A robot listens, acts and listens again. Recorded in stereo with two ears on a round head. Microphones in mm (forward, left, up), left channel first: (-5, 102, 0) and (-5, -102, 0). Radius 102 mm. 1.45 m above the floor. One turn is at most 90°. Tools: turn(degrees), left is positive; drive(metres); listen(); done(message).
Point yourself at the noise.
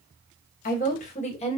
turn(degrees=25)
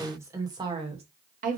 turn(degrees=-40)
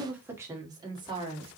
turn(degrees=-25)
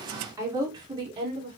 turn(degrees=-25)
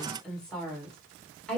done("Facing the woman speaking.")